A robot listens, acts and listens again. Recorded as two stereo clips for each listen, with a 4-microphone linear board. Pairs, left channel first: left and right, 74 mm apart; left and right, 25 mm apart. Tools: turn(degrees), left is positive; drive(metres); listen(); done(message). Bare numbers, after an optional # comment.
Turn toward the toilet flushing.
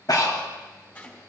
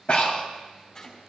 listen()
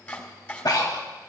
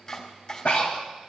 listen()
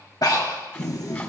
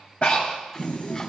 # The toilet flushing: about 60° left or 120° left.
turn(60)
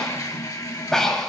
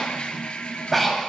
# So it is at 60° left.
turn(60)
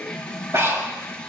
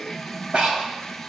# The toilet flushing is now 15° left.
turn(15)
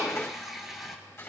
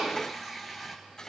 done("Found it: a toilet flushing, straight ahead.")